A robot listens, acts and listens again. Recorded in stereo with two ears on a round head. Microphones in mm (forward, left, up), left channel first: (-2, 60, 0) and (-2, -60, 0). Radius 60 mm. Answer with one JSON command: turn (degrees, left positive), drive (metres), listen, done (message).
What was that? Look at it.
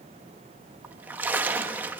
{"turn": -30}
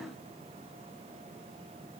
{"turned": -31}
{"listen": true}
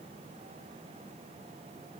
{"done": "I heard a splash, but can't make it out now. It was about 15° left or 135° right."}